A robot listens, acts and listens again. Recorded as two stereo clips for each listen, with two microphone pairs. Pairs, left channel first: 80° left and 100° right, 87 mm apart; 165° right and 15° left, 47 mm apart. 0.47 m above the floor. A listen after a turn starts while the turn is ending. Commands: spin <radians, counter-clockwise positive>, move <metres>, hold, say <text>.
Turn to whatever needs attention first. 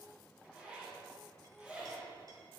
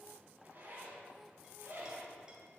hold
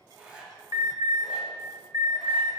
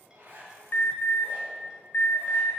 spin -2.44
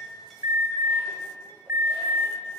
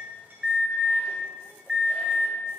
spin -0.87
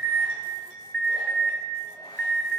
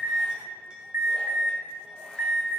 say Facing the alarm.